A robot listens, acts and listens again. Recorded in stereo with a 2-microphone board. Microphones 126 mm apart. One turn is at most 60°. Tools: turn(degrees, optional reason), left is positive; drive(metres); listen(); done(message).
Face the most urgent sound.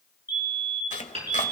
turn(degrees=-15, reason="The fire alarm: about 15° right or 165° right.")
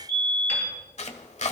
turn(degrees=-60, reason="So it is at 150° right.")
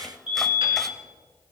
turn(degrees=-60, reason="The fire alarm is now 90° right.")
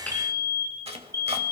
turn(degrees=-30, reason="The fire alarm is now 30° right.")
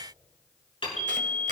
done("Facing the fire alarm.")